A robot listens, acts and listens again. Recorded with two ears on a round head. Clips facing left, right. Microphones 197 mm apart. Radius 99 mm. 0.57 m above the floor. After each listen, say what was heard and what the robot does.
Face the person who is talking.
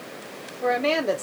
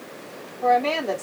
The woman speaking: about 25° left or 155° left. Turn 25° left.
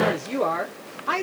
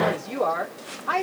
So it is at 125° left. Turn 125° left.
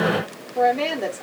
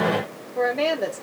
Found it: a woman speaking, straight ahead, 1 to 2 m away.